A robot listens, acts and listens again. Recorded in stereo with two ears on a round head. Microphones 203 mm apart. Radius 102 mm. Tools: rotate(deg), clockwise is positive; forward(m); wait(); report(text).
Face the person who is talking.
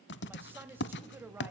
rotate(30)
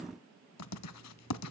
wait()
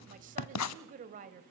rotate(140)
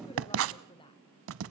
rotate(-25)
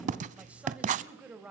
report("Facing the woman speaking.")